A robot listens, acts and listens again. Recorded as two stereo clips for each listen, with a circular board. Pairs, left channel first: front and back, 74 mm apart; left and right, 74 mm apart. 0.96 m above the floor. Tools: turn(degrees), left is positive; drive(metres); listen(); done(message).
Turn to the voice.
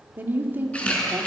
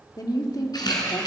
turn(degrees=120)
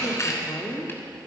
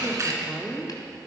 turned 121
done("Found it: a woman speaking, straight ahead, 1 to 2 m away.")